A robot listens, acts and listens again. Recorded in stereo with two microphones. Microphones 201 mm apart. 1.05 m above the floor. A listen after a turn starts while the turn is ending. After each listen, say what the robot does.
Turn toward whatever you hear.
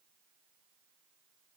Keep listening.
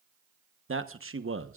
Turn 90° right.
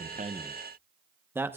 Turn 10° right.
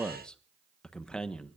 Found it: a man speaking, straight ahead, 1 to 2 m away.